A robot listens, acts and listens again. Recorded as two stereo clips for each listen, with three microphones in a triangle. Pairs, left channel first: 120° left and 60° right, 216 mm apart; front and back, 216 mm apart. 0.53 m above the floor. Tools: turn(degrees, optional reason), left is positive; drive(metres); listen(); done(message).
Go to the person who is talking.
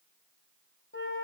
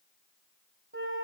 listen()
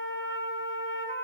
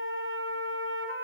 listen()
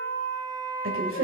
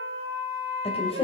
turn(degrees=-60, reason="The woman speaking: 60° right.")
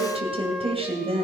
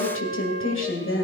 drive(metres=1.0)
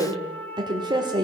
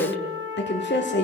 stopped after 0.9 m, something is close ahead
done("Arrived at the woman speaking, straight ahead.")